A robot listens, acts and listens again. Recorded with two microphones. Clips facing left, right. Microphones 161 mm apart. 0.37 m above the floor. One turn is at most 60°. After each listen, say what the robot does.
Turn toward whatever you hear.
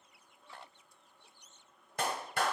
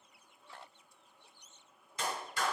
Turn 60° left.
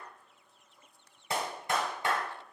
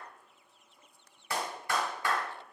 Turn 25° left.
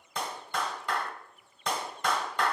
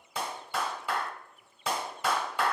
Turn 10° right.
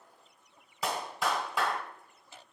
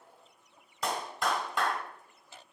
Found it: a clap, straight ahead, 1 to 2 m away.